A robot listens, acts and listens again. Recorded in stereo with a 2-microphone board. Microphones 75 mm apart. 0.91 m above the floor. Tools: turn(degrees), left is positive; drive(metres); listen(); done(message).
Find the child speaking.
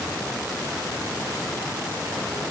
listen()
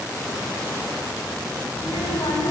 turn(degrees=90)
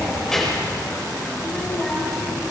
done("Found it: a child speaking, straight ahead.")